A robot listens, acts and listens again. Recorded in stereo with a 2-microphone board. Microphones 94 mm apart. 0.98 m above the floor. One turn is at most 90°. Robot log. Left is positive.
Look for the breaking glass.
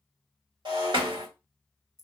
note: The breaking glass: about 55° right or 125° right.
cmd yaw -55
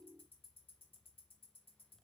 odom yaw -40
cmd idle
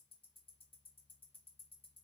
end: I heard breaking glass, but can't make it out now. It was about 15° right or 85° right.